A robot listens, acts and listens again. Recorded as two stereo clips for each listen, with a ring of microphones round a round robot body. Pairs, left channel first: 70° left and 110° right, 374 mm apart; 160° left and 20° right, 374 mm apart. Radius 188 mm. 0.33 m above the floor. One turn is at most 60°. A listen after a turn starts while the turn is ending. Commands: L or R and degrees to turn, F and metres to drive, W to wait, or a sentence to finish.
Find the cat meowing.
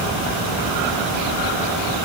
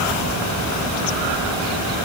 W
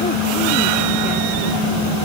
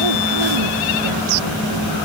W
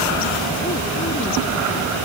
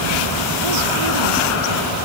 I can't make out a cat meowing to turn to.